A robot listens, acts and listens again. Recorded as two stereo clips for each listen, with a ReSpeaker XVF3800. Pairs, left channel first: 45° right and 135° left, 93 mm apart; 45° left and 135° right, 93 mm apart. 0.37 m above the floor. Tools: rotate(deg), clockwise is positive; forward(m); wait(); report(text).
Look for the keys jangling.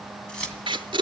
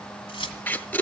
rotate(-35)
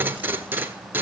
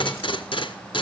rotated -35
wait()
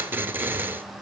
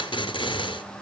wait()
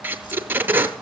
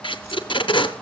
report("I heard keys jangling from this way, but can't make it out now.")